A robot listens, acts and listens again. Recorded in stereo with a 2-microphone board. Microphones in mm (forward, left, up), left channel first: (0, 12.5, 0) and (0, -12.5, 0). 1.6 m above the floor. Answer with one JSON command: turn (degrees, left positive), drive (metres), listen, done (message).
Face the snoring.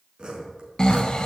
{"turn": 30}
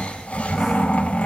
{"turn": 120}
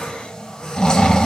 {"turn": 30}
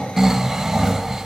{"turn": -15}
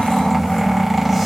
{"done": "Found it: snoring, straight ahead."}